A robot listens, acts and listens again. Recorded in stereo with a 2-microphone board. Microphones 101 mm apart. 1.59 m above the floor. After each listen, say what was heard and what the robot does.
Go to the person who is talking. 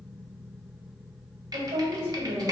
The woman speaking: about 70° right or 110° right. Turn 70° right.
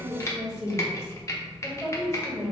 Drive 1.0 m forward.
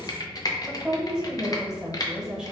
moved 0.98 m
The woman speaking is now 10° right. Turn 10° right.
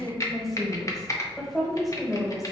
Drive 1.0 m forward.
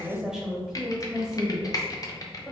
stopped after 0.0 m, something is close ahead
I am next to the woman speaking.